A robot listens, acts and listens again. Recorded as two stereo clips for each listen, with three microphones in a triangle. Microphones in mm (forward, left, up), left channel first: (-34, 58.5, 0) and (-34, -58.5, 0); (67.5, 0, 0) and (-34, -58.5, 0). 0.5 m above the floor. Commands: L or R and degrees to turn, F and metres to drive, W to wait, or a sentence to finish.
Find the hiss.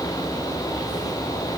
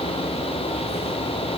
W
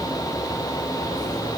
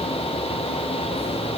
W
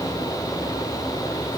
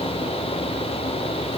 I can't make out a hiss.